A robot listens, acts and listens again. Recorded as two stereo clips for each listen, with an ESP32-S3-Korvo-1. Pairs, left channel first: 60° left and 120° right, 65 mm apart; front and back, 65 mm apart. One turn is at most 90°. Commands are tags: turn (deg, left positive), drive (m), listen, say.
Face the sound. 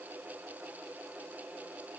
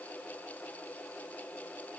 <listen/>
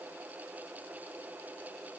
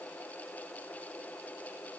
<listen/>
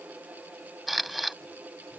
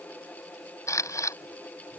<turn deg="-35"/>
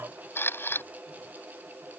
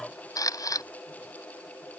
<turn deg="10"/>
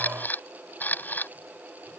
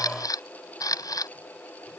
<say>Found it: a camera shutter, straight ahead.</say>